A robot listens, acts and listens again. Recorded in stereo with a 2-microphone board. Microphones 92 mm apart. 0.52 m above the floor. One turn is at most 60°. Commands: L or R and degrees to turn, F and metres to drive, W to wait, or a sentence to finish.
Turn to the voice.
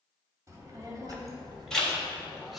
R60
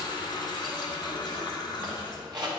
R55
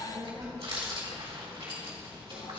R35
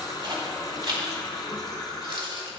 Found it: a child speaking, straight ahead.